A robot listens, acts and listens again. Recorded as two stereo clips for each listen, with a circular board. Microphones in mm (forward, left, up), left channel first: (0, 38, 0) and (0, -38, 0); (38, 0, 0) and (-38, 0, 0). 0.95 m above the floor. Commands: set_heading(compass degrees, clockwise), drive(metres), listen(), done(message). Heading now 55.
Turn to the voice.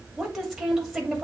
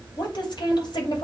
done("Facing the woman speaking.")